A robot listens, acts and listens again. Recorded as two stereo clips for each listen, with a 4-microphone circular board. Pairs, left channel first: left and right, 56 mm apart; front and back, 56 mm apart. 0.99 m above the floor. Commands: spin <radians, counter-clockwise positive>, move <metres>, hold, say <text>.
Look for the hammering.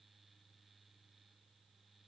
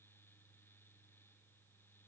hold
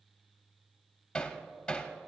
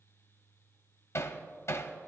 spin 0.35
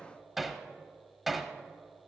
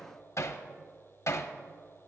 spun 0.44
say Found it: hammering, straight ahead.